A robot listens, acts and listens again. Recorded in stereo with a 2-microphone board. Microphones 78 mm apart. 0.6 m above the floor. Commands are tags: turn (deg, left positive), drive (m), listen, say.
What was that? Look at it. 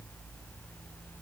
<listen/>
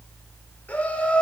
<turn deg="30"/>
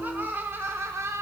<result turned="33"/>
<turn deg="-40"/>
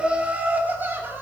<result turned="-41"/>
<turn deg="-30"/>
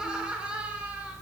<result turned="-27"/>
<turn deg="-15"/>
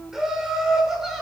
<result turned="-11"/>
<say>Found it: laughter, straight ahead, 1 to 2 m away.</say>